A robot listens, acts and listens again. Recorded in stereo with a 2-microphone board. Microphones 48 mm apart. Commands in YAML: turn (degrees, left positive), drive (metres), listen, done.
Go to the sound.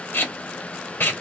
turn: 50
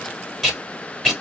drive: 1.0
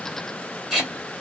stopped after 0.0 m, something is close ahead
done: "Blocked. The tape being pulled is further on, straight ahead."